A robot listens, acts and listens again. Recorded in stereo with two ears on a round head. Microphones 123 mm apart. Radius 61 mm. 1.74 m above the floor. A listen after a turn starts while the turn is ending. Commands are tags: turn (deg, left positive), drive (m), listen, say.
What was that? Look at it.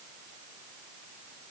<listen/>
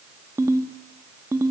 <turn deg="-20"/>
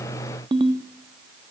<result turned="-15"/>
<turn deg="-145"/>
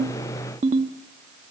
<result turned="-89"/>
<turn deg="-55"/>
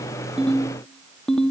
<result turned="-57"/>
<say>Found it: a ringtone, straight ahead.</say>